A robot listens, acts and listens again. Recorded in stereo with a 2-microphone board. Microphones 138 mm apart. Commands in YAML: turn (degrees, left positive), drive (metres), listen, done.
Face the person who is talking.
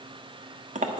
listen: true
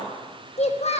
turn: 55
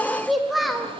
done: "Found it: a child speaking, straight ahead, 1 to 2 m away."